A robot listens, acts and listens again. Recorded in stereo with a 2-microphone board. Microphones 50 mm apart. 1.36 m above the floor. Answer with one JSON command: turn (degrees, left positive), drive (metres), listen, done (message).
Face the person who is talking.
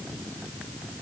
{"listen": true}
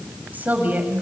{"turn": -35}
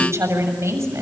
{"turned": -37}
{"turn": -105}
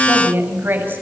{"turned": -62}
{"turn": -45}
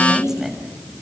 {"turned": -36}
{"turn": -10}
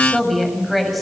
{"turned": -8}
{"done": "Facing the woman speaking, over 4 m away."}